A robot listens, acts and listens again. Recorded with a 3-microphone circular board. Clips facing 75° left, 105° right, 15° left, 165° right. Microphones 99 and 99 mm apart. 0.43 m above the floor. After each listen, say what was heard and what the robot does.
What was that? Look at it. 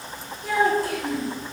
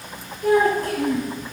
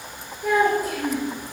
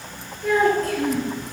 The child speaking: 65° right. Turn 65° right.
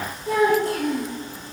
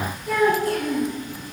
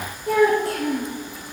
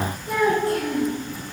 The child speaking is now 15° left. Turn 15° left.
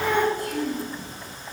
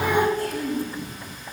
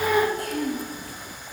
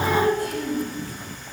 Found it: a child speaking, straight ahead.